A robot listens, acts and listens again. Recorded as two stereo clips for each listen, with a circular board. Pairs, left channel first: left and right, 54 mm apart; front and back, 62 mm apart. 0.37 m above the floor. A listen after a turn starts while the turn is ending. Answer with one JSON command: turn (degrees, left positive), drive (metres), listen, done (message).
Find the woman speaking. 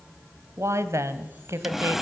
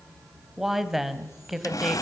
{"turn": -95}
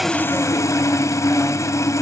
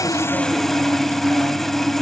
{"listen": true}
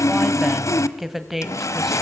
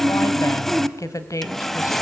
{"done": "Found it: a woman speaking, straight ahead."}